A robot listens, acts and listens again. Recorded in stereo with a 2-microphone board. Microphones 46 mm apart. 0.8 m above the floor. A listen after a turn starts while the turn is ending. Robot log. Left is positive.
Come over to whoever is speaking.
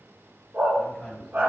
cmd yaw +30
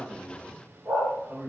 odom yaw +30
note: So it is at 30° right.
cmd yaw -30
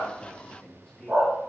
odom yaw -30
note: The man speaking is now 10° left.
cmd yaw +10
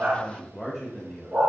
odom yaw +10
cmd fwd 1.0
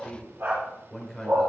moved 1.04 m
cmd fwd 1.0
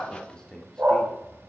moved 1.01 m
note: The man speaking is now 15° left.
cmd yaw +15
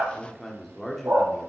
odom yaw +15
cmd fwd 1.0
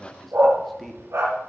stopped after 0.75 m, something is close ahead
end: I am next to the man speaking.